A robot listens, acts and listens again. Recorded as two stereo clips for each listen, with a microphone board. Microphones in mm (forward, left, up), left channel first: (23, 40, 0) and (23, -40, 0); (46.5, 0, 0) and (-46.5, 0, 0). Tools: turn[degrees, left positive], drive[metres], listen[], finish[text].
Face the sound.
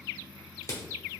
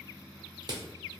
Thought: The crushing: 135° left.
Action: turn[135]
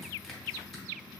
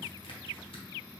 Action: listen[]
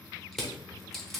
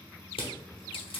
Action: finish[Facing the crushing, under 1 m away.]